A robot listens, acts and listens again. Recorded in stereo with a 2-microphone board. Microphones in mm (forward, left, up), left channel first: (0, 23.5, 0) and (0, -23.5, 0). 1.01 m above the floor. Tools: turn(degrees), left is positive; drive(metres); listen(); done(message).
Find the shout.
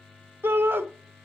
turn(degrees=-50)
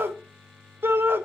turn(degrees=-65)
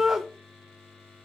turn(degrees=-10)
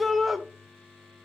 done("Found it: a shout, straight ahead, under 1 m away.")